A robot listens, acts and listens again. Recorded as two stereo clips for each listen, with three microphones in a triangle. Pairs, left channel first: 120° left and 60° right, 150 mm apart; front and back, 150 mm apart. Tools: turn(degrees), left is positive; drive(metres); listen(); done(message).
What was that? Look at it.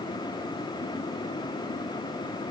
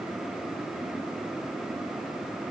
listen()
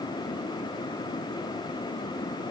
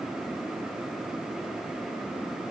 listen()
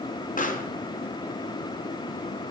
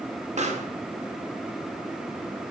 turn(degrees=145)
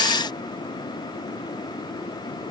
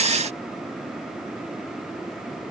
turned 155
turn(degrees=-10)
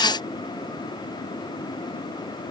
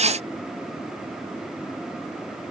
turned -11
done("Facing where the pop came from. I can't hear it now.")